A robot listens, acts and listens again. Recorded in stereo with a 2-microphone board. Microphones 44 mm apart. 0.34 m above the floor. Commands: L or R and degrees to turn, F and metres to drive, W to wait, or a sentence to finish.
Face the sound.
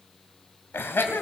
L55
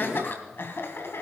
L60
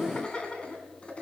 L25
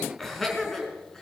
L10
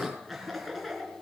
Found it: laughter, straight ahead, over 4 m away.